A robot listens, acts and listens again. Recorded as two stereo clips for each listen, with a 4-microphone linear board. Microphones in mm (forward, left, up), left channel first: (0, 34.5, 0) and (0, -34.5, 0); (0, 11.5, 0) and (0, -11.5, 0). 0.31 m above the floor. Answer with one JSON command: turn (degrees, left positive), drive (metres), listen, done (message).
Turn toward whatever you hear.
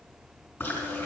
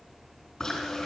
{"turn": 20}
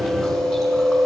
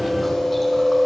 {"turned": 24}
{"done": "Found it: chewing, straight ahead, 2 to 4 m away."}